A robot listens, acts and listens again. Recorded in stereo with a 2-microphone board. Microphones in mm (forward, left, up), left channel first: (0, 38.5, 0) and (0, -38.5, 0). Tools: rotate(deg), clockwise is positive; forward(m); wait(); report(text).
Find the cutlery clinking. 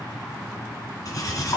rotate(-50)
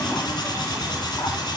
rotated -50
rotate(-75)
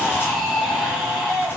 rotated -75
wait()
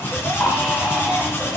rotate(-30)
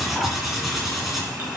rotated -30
report("Facing the cutlery clinking, 2 to 4 m away.")